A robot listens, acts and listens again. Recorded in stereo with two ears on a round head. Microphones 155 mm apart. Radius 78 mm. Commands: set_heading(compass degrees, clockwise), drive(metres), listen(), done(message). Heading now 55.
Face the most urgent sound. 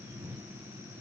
listen()
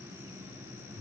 listen()
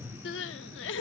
set_heading(325)
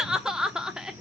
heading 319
done("Facing the crying.")